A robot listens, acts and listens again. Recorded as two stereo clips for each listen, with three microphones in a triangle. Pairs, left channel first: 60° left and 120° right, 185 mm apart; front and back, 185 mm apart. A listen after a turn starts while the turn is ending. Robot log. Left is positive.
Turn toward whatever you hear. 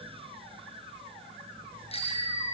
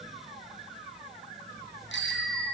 end: Facing the bicycle bell.